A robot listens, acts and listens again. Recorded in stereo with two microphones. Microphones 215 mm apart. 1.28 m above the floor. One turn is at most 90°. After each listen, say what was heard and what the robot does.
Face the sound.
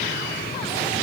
Keep listening.
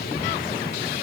Keep listening.
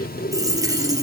The dropped coin: about 15° right or 165° right. Turn 15° right.
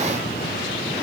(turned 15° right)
Keep listening.
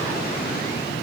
I heard a dropped coin, but can't make it out now. It was about straight ahead or 150° right.